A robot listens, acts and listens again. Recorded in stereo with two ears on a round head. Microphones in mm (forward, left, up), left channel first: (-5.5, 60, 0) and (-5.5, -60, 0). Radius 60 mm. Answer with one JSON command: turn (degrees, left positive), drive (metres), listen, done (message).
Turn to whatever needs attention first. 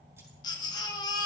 {"turn": 30}
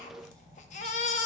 {"turn": 120}
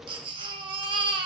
{"turn": -35}
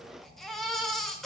{"done": "Found it: a baby crying, straight ahead."}